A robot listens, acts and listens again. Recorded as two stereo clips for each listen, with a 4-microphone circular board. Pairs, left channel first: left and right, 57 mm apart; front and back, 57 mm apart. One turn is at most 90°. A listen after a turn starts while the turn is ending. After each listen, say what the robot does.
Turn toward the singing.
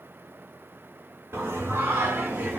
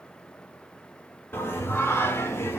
Turn 35° right.
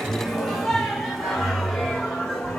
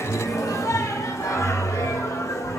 Turn 15° left.
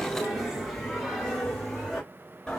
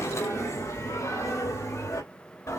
Facing the singing, 2 to 4 m away.